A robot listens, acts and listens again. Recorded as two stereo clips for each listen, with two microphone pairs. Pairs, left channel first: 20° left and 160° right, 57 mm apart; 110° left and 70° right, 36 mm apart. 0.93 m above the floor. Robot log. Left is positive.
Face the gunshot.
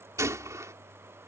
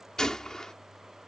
note: The gunshot: straight behind.
cmd yaw +180
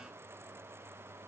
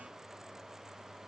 end: Facing where the gunshot came from. I can't hear it now.